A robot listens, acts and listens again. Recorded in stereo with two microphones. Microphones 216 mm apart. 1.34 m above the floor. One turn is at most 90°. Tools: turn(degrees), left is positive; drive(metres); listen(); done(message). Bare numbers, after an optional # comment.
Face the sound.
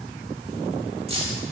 # The keys jangling: about 25° right or 155° right.
turn(-25)
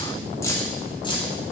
# So it is at 25° left.
turn(25)
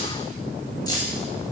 # The keys jangling is now 20° left.
turn(20)
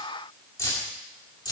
# The keys jangling is now 20° left.
turn(20)
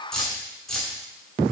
done("Facing the keys jangling, 2 to 4 m away.")